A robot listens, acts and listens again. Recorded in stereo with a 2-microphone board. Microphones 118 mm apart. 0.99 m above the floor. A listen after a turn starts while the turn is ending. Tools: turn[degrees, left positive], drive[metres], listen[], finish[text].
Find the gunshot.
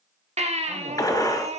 Thought: The gunshot: about 30° left or 150° left.
Action: turn[30]
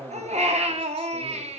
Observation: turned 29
Action: listen[]
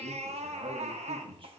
Action: finish[I heard a gunshot, but can't make it out now. It was about straight ahead or 120° left.]